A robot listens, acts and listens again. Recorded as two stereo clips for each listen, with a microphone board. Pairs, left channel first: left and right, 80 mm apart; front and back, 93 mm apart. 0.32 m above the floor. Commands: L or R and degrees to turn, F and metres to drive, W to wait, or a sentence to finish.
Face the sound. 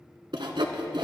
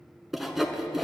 R95
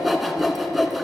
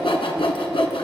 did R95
Found it: sawing, straight ahead.